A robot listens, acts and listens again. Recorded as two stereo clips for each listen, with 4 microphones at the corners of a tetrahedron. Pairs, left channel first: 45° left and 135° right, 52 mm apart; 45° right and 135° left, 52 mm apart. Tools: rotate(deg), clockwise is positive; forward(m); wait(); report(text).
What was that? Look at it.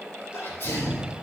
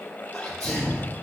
rotate(-30)
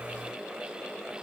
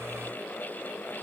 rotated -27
report("I heard a sneeze from this way, but can't make it out now.")